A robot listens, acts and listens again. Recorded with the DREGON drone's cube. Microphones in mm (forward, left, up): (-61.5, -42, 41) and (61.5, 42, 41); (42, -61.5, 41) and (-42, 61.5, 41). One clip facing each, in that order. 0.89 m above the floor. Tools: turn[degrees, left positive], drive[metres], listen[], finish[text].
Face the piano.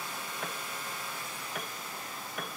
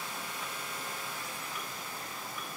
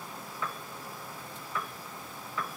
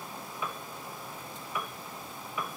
Thought: The piano: 160° right.
Action: turn[-160]
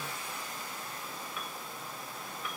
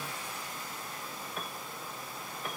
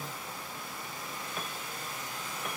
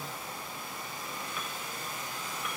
Thought: The piano is now 10° right.
Action: turn[-10]
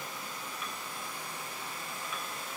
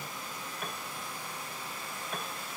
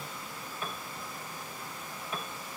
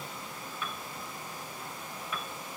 Action: finish[Facing the piano.]